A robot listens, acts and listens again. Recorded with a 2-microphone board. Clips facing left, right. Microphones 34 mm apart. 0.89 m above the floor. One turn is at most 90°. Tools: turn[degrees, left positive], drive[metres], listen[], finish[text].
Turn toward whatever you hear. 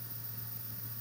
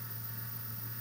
Action: listen[]
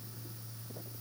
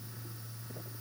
Action: listen[]
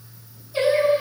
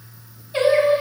Thought: The singing: about 55° right or 125° right.
Action: turn[-55]
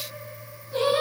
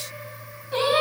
Thought: So it is at 70° right.
Action: turn[-70]
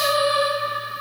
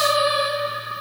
Thought: The singing is now 20° right.
Action: turn[-20]
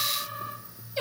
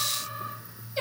Action: finish[Facing the singing, over 4 m away.]